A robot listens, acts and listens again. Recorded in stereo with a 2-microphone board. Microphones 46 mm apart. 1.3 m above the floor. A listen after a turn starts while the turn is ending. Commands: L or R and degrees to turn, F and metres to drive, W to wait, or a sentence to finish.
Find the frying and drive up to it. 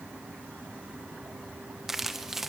W
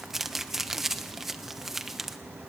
W
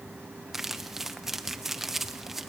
I can't make out frying, only crumpling.